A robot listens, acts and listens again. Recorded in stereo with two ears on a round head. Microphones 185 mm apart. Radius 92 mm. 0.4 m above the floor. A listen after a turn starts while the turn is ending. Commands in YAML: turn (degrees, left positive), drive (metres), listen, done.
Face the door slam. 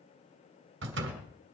turn: -60
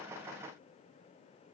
listen: true
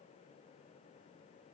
done: "I heard a door slam, but can't make it out now. It was about straight ahead or 60° right."